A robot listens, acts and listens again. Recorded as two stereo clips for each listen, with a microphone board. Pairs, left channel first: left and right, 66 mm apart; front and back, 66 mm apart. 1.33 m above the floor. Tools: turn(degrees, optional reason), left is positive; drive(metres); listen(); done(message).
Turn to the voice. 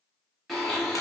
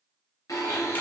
listen()
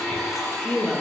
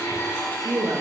turn(degrees=165, reason="The woman speaking: 165° left.")
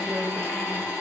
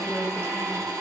listen()
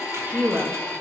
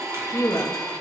turn(degrees=-30, reason="The woman speaking is now 30° right.")
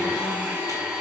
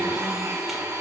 listen()
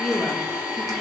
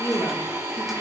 turn(degrees=10, reason="The woman speaking is now 10° left.")
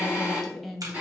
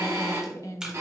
done("Found it: a woman speaking, straight ahead.")